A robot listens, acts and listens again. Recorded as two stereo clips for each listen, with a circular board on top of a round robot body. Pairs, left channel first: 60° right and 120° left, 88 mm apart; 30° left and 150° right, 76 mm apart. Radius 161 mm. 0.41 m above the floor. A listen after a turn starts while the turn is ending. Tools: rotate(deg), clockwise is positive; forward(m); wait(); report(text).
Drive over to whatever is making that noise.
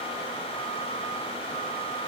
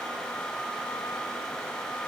wait()
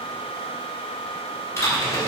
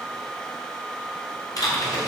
forward(1.0)
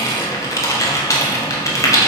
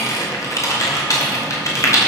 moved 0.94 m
rotate(10)
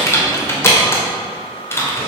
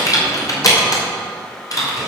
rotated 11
forward(1.0)
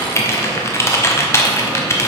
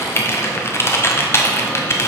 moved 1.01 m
rotate(15)
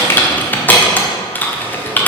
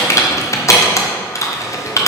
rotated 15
forward(1.0)
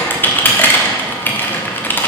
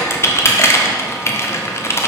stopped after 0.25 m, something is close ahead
report("Arrived at the typing on a keyboard, straight ahead.")